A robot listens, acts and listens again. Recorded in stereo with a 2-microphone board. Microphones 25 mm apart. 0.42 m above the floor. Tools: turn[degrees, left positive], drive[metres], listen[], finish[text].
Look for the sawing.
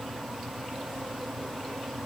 Action: listen[]
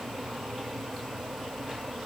Action: listen[]
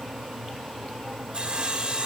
Thought: The sawing: about 35° right or 145° right.
Action: turn[-35]
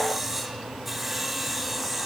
Action: finish[Found it: sawing, straight ahead.]